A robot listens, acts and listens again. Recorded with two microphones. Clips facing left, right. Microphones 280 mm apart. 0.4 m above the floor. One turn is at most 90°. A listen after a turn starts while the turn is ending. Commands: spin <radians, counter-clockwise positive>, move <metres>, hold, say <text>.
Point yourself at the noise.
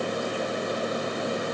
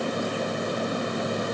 hold
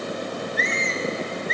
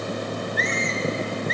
spin 0.61
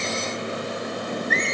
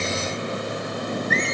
say Facing the squeak, 2 to 4 m away.